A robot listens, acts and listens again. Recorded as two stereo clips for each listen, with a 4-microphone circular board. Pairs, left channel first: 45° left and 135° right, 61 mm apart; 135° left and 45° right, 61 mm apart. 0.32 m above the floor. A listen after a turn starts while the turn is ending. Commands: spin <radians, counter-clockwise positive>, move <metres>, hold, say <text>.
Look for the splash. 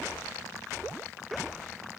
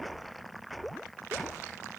hold
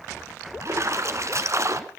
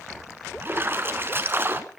spin -1.75
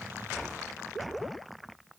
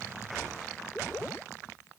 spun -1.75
say I heard a splash from this way, but can't make it out now.